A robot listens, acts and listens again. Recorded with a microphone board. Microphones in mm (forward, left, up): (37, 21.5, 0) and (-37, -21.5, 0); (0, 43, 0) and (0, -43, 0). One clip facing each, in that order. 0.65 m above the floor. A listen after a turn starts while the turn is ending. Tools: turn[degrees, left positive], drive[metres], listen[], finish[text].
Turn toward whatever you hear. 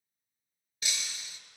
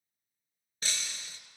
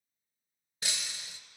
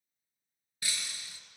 Thought: The breaking glass: 155° left.
Action: turn[155]
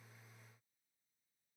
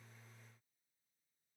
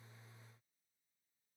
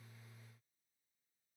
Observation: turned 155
Action: finish[Facing where the breaking glass came from. I can't hear it now.]